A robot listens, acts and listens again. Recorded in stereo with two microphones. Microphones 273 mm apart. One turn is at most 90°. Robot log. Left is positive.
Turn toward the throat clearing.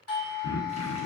note: The throat clearing: about 60° left or 120° left.
cmd yaw +60
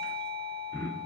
note: So it is at 10° left.
cmd yaw +10
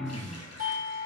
end: Found it: throat clearing, straight ahead, under 1 m away.